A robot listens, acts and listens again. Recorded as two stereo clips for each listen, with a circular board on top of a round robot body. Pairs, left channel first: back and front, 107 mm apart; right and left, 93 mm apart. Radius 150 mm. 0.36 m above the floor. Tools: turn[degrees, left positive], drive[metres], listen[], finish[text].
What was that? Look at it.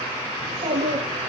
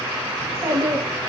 Thought: The child speaking: 30° left.
Action: turn[30]
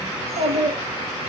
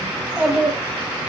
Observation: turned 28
Thought: The child speaking is now 10° left.
Action: turn[10]
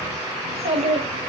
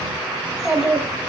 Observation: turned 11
Thought: The child speaking is now 10° left.
Action: turn[10]
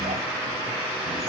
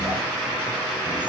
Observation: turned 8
Action: listen[]
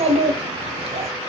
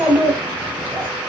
Thought: The child speaking is now 15° left.
Action: turn[15]
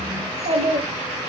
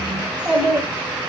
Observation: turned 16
Thought: The child speaking is now 10° left.
Action: turn[10]
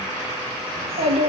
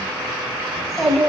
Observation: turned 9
Action: finish[Facing the child speaking, 2 to 4 m away.]